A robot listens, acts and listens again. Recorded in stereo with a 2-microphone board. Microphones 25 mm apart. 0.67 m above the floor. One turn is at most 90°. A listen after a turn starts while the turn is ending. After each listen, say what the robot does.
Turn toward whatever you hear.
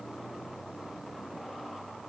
Keep listening.
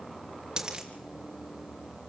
Turn 25° right.
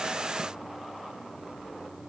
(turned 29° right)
Keep listening.
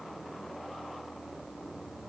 I heard a dropped coin, but can't make it out now. It was about 5° left or 125° right.